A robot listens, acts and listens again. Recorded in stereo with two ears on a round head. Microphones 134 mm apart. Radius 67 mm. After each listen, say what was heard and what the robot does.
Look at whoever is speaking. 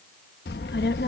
Turn 90° left.
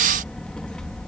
Facing the child speaking.